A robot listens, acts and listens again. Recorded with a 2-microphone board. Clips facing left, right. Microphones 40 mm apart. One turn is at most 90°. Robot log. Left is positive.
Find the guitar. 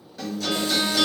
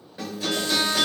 note: The guitar: about 20° right or 160° right.
cmd yaw -20
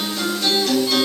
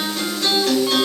note: So it is at 135° right.
cmd yaw -90
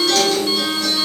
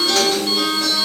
note: The guitar is now 30° right.
cmd yaw -30
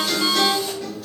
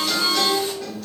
end: Facing the guitar.